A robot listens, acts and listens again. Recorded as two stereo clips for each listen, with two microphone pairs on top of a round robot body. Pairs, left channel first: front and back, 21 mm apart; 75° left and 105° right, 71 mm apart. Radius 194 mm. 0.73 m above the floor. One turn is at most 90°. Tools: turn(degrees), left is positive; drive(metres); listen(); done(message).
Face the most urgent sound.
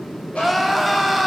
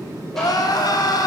turn(degrees=90)
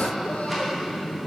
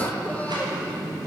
turn(degrees=10)
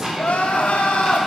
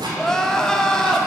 done("Found it: crying, straight ahead, 1 to 2 m away.")